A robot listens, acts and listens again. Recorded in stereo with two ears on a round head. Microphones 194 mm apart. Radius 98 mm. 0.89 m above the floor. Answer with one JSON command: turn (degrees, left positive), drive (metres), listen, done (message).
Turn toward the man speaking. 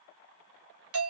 {"listen": true}
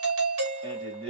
{"turn": -25}
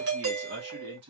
{"turn": -125}
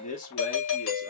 {"turn": 35}
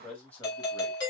{"done": "Found it: a man speaking, straight ahead, 2 to 4 m away."}